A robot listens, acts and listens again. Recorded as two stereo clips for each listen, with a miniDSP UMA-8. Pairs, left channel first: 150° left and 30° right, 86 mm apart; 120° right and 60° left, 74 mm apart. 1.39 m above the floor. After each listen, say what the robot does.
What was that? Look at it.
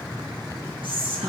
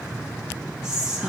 Turn 20° right.
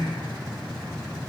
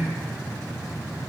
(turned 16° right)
Facing the whispering.